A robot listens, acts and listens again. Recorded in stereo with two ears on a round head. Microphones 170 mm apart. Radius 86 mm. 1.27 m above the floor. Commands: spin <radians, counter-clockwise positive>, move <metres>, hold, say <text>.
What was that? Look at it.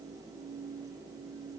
hold
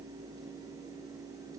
hold
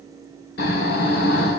spin 1.05
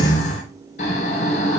spin 0.79
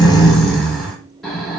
say Found it: snoring, straight ahead.